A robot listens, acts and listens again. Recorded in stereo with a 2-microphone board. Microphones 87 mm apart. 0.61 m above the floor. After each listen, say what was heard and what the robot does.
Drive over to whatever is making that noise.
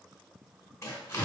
The tearing paper: about 35° left or 145° left. Turn 35° left.
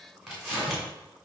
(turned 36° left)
Drive 1.0 m forward.
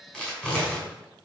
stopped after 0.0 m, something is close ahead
The tearing paper is now 10° left. Turn 10° left.
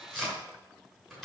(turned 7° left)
Blocked. The tearing paper is further on, straight ahead.